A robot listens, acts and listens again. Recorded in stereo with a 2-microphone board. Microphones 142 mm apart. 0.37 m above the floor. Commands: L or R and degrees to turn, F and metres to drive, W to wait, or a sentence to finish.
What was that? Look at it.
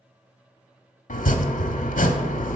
L90
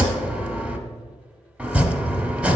R10
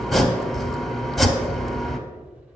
Facing the chopping.